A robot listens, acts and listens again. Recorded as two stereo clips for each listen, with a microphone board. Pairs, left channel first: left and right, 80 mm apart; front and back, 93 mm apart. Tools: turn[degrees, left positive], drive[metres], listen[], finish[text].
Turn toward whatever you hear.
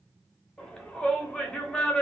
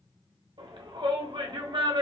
Thought: The shout: 170° left.
Action: turn[170]
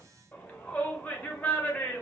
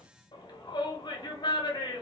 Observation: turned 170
Thought: The shout is now 25° left.
Action: turn[25]
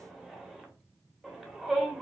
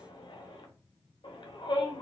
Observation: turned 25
Action: finish[Found it: a shout, straight ahead.]